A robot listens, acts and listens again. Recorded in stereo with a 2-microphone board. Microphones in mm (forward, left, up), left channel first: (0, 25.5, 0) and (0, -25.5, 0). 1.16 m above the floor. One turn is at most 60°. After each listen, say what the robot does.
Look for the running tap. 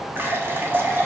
Turn 45° right.
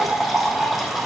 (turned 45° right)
Facing the running tap, 1 to 2 m away.